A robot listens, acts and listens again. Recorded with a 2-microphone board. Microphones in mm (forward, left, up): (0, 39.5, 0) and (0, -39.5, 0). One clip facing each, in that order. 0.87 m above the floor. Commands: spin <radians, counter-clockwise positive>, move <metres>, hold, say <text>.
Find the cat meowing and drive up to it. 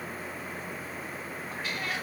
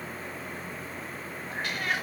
spin -1.31
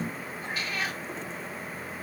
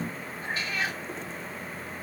spin -0.52
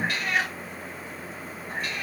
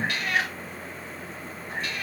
move 1.0
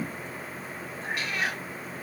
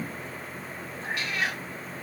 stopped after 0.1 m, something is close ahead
say Blocked. The cat meowing is further on, straight ahead.